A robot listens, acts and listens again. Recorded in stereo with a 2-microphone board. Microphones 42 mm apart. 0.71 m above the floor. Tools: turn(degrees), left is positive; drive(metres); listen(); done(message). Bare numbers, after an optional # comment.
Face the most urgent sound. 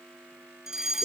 turn(-30)
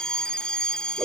# So it is at 20° left.
turn(20)
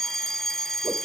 # The fire alarm is now 10° left.
turn(10)
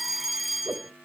done("Facing the fire alarm.")